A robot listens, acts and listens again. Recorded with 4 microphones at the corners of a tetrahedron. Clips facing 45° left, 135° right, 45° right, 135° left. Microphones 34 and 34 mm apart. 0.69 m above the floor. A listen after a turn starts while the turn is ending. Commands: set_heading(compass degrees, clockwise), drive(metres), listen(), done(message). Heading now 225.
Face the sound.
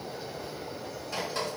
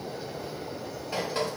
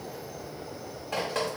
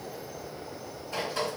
set_heading(290)
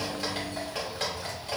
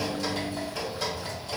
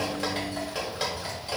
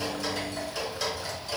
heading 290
set_heading(280)
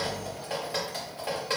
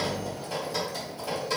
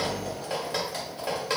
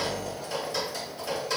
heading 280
done("Facing the dripping.")